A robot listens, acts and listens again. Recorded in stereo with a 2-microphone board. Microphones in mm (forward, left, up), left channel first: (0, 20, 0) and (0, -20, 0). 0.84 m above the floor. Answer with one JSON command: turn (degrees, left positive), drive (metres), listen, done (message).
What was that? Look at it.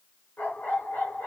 {"turn": 50}
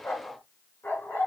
{"turn": 80}
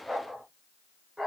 {"turn": -10}
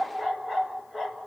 {"done": "Facing the dog barking, 2 to 4 m away."}